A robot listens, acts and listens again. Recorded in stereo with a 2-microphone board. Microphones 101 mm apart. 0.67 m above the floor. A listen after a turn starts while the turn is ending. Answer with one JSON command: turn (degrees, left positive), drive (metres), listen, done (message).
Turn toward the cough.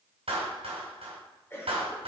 {"turn": 25}
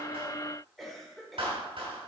{"done": "Found it: a cough, straight ahead."}